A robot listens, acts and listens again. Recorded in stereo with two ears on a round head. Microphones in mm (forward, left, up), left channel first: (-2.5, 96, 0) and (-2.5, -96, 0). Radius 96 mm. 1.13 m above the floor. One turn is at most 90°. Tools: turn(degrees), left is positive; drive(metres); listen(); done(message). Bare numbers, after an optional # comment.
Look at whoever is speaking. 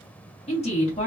# The woman speaking: about 30° left or 150° left.
turn(30)
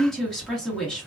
done("Found it: a woman speaking, straight ahead, 1 to 2 m away.")